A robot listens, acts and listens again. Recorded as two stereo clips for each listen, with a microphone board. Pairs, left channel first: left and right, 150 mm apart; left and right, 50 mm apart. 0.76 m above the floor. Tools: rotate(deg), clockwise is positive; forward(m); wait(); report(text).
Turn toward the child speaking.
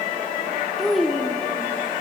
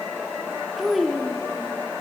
rotate(-30)
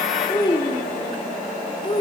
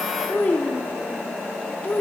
rotate(-150)
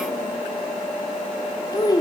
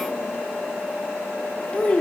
rotate(-25)
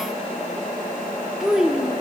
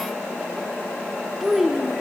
report("Found it: a child speaking, straight ahead.")